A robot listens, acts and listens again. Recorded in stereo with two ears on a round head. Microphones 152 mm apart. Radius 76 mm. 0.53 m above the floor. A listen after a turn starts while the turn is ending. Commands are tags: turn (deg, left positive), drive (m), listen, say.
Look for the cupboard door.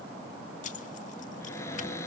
<turn deg="15"/>
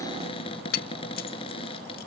<turn deg="145"/>
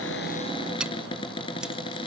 <turn deg="30"/>
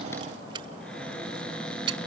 <say>Found it: a cupboard door, straight ahead.</say>